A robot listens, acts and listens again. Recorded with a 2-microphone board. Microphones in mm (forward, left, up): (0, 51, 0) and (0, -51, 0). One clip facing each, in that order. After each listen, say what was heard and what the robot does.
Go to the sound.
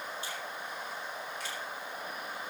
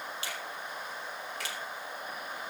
Turn 90° right.
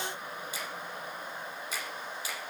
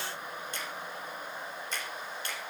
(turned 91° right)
Drive 1.0 m forward.
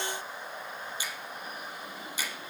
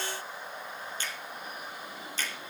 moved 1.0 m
The finger snap is now 10° left. Turn 10° left.
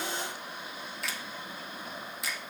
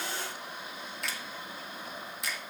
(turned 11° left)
Drive 1.0 m forward.
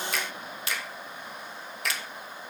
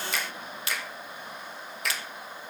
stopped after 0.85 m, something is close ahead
I am next to the finger snap.